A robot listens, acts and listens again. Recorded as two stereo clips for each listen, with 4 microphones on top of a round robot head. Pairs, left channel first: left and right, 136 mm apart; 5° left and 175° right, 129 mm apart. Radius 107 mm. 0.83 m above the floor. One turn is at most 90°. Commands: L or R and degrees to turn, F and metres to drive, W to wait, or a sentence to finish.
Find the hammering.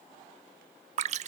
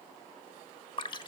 W
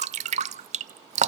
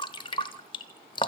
W
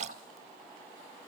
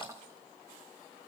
I can't make out hammering, only dripping.